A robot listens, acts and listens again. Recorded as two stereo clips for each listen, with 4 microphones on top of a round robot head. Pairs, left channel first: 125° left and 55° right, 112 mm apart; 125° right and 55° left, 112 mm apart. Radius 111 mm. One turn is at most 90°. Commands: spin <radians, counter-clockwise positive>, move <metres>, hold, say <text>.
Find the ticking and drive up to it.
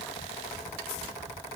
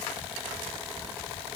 hold
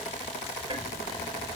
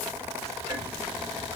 spin -0.17
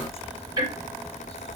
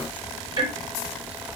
move 1.0
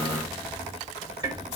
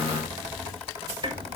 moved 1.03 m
move 1.0
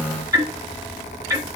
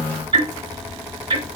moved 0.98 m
spin 0.17
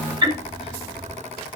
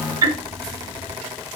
move 1.0
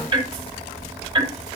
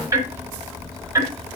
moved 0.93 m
spin -0.17
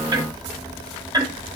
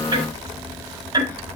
move 1.0
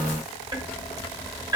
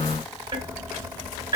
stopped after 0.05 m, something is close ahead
say I am next to the ticking.